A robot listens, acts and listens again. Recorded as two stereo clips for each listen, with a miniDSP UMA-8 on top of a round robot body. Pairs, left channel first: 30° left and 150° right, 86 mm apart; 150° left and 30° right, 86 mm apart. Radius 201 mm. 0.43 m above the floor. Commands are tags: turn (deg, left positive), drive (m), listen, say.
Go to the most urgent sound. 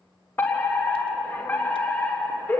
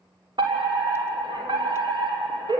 <turn deg="-30"/>
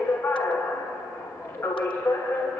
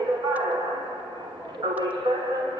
<turn deg="-20"/>
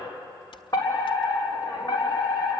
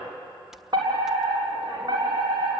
<drive m="1.0"/>
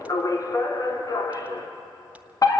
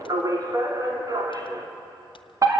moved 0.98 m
<drive m="1.0"/>
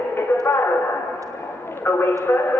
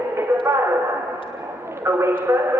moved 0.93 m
<drive m="1.0"/>
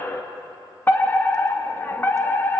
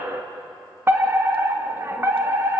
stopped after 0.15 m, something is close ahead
<turn deg="-10"/>
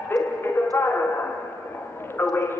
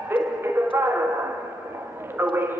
<say>Arrived at the fire alarm, straight ahead.</say>